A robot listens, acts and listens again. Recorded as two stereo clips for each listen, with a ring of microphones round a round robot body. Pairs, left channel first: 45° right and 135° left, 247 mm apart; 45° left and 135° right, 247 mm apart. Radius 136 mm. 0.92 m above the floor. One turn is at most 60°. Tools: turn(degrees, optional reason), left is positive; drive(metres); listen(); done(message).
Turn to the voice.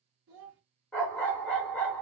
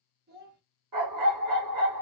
turn(degrees=60, reason="The child speaking: 170° left.")
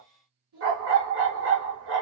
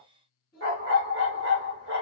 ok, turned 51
turn(degrees=60, reason="The child speaking is now 120° left.")
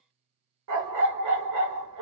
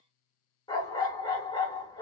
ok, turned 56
turn(degrees=60, reason="Nothing new. It was at 65° left.")
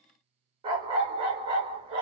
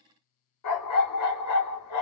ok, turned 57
listen()
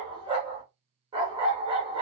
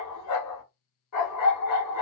done("I heard a child speaking from this way, but can't make it out now.")